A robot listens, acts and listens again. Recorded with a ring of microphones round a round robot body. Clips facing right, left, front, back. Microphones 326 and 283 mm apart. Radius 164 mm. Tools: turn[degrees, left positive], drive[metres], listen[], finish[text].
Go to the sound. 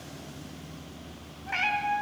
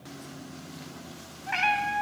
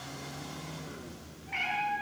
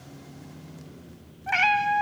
Thought: The cat meowing: 175° left.
Action: turn[175]
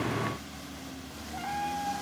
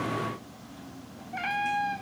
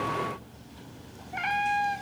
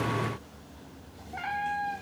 Thought: The cat meowing is now 45° left.
Action: turn[45]
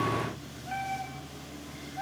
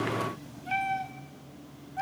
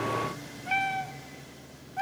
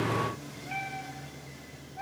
Thought: The cat meowing is now 25° left.
Action: turn[25]
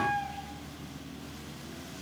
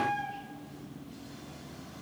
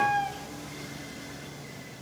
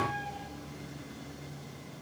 Action: drive[1.0]
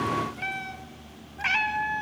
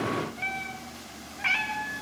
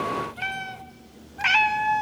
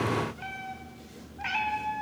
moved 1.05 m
Thought: The cat meowing is now 10° right.
Action: turn[-10]
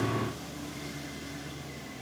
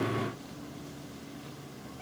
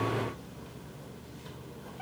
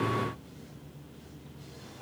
Action: listen[]
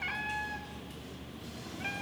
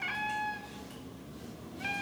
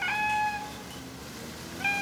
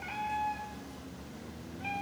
Action: drive[1.0]
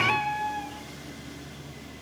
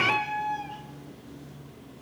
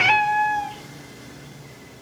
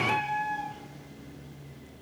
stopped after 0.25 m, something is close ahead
Action: finish[Arrived at the cat meowing, straight ahead.]